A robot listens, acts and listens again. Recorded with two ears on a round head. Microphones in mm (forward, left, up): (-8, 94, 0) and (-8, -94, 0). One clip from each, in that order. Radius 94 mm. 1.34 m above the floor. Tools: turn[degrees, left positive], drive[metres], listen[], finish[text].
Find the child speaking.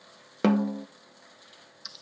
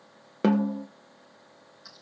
Action: listen[]
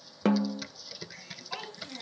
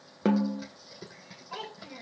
Thought: The child speaking: about 40° left or 140° left.
Action: turn[40]
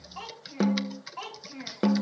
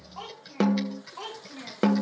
Thought: So it is at 95° left.
Action: turn[95]
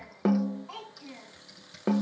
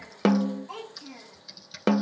Thought: The child speaking is now 30° left.
Action: turn[30]
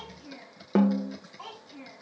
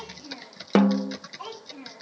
Thought: The child speaking is now 15° left.
Action: turn[15]
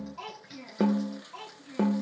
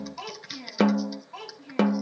Action: finish[Facing the child speaking, over 4 m away.]